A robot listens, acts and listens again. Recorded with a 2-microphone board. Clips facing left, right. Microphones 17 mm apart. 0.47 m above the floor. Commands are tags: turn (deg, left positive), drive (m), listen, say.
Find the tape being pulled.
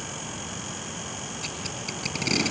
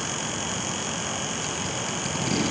<turn deg="20"/>
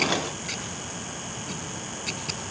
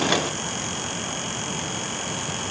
<listen/>
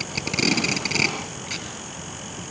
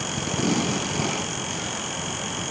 <turn deg="140"/>
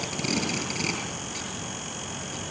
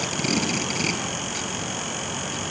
<say>Facing the tape being pulled, over 4 m away.</say>